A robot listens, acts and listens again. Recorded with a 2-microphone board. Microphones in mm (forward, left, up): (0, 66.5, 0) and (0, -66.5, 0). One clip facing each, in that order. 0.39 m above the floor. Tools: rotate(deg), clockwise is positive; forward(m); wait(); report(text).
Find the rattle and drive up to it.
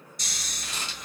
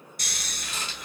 rotate(-30)
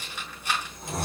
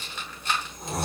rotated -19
rotate(-10)
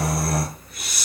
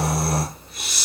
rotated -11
wait()
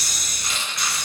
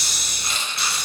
forward(1.0)
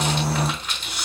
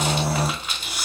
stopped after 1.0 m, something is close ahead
rotate(10)
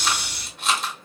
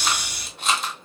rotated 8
report("I am next to the rattle.")